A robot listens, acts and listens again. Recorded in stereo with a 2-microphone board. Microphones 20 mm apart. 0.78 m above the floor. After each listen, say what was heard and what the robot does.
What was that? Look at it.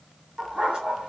The dog barking: about 55° right or 125° right. Turn 55° right.
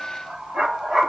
So it is at 60° right. Turn 60° right.
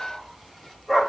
Facing the dog barking, 1 to 2 m away.